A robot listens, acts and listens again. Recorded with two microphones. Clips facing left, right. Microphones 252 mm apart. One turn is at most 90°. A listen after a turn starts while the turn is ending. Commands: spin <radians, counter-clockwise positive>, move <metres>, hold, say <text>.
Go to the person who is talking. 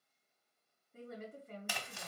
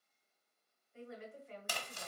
spin 0.79
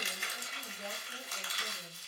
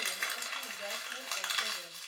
hold
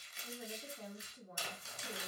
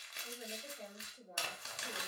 spin 1.57
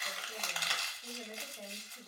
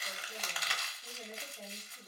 move 1.0
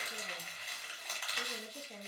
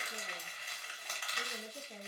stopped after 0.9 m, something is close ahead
say I am next to the woman speaking.